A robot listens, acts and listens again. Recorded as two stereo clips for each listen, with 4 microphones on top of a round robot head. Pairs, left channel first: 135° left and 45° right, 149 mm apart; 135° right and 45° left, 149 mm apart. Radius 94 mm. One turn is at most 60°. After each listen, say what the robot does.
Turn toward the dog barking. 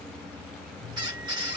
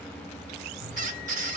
Keep listening.
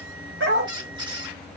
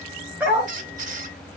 Turn 35° right.
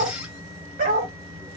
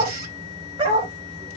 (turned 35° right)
Turn 10° right.
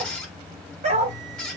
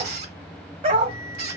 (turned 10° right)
Facing the dog barking.